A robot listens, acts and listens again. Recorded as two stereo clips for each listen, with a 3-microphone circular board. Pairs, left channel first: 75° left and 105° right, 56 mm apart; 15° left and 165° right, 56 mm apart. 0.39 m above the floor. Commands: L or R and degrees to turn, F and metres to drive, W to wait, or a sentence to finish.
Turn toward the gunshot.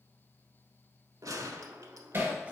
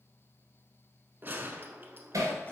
R110
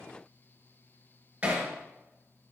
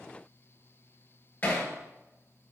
Facing where the gunshot came from. I can't hear it now.